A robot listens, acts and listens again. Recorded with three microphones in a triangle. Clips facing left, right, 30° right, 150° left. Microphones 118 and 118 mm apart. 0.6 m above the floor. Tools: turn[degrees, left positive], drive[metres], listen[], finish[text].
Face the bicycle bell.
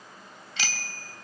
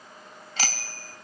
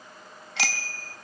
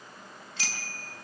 Thought: The bicycle bell: 40° right.
Action: turn[-40]
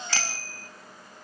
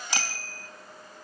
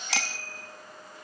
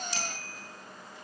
Thought: The bicycle bell is now 15° right.
Action: turn[-15]
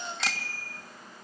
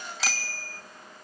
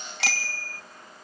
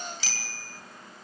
Action: finish[Found it: a bicycle bell, straight ahead, 2 to 4 m away.]